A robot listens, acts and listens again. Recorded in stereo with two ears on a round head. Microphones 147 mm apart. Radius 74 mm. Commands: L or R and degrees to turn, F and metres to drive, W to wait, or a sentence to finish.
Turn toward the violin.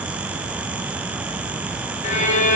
L45
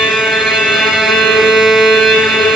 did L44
Facing the violin.